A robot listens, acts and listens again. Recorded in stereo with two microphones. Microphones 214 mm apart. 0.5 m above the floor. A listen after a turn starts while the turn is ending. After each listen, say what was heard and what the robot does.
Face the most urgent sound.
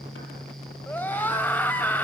Turn 30° left.
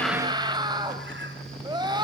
So it is at 20° right. Turn 20° right.
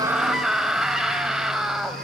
Found it: a scream, straight ahead.